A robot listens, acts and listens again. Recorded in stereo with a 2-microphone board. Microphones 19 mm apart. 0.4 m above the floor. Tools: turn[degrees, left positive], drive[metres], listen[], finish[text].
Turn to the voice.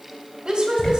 Thought: The woman speaking: about 50° right or 130° right.
Action: turn[-50]
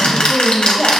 Action: finish[Found it: a woman speaking, straight ahead.]